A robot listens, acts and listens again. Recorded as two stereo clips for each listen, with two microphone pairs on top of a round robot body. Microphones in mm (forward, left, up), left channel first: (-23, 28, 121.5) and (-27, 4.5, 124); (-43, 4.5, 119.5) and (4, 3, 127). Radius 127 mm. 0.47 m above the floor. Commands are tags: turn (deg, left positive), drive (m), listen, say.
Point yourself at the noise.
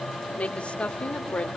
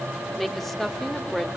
<turn deg="100"/>
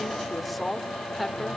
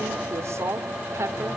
<say>Facing the woman speaking.</say>